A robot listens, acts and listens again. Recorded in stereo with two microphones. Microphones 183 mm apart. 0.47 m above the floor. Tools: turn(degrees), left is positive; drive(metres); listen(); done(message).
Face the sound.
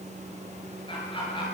turn(degrees=25)
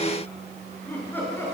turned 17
turn(degrees=30)
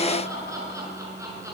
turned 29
turn(degrees=-15)
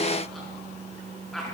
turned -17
done("Found it: laughter, straight ahead, over 4 m away.")